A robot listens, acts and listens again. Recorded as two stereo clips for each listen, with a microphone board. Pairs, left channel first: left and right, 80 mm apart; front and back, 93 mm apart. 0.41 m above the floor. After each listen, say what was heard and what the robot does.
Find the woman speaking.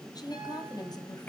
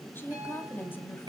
The woman speaking: 65° left. Turn 65° left.
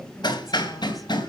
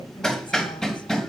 Keep listening.
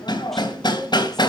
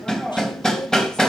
Keep listening.
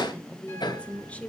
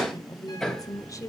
The woman speaking is now 30° left. Turn 30° left.
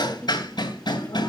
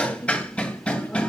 Keep listening.
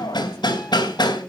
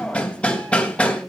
Keep listening.
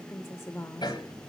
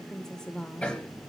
The woman speaking is now 75° left. Turn 75° left.
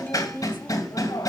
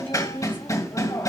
The woman speaking is now 50° left. Turn 50° left.
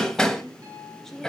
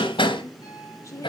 The woman speaking is now 10° left. Turn 10° left.
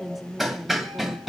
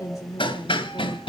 Facing the woman speaking.